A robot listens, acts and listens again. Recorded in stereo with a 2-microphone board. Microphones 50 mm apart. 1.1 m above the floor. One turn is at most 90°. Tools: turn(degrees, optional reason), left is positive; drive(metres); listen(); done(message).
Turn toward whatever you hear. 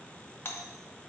turn(degrees=50, reason="The doorbell: about 50° left or 130° left.")
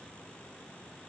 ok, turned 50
listen()
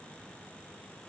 listen()
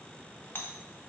turn(degrees=65, reason="So it is at 65° left.")
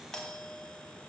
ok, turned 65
turn(degrees=20, reason="The doorbell is now 20° left.")
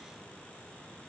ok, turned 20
listen()
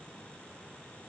listen()
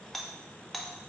done("Facing the doorbell, 1 to 2 m away.")